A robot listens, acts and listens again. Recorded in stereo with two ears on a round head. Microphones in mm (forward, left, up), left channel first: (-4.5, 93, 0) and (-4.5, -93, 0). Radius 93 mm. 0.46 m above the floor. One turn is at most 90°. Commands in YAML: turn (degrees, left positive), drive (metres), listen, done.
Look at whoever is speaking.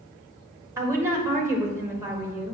turn: -30
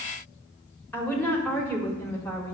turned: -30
turn: 10
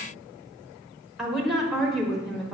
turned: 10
done: "Facing the woman speaking, 1 to 2 m away."